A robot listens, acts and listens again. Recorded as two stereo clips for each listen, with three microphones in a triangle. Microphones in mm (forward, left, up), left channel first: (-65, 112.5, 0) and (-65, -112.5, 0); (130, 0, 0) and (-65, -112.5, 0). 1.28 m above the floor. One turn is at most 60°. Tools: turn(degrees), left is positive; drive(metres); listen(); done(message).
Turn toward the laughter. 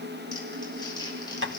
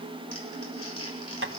listen()
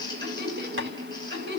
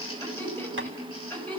turn(degrees=-55)
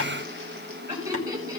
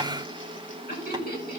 turn(degrees=-15)
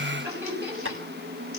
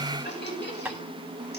turn(degrees=-10)
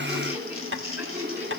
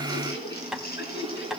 done("Found it: laughter, straight ahead.")